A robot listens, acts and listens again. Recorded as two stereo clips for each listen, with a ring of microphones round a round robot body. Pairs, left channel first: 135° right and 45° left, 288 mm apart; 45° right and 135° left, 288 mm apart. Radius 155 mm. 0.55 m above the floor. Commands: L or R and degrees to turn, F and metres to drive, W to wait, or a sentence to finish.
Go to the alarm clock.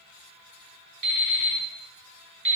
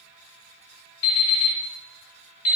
R10
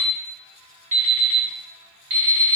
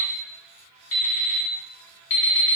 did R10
F1.0
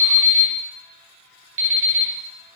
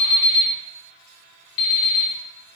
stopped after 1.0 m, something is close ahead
Arrived at the alarm clock, straight ahead.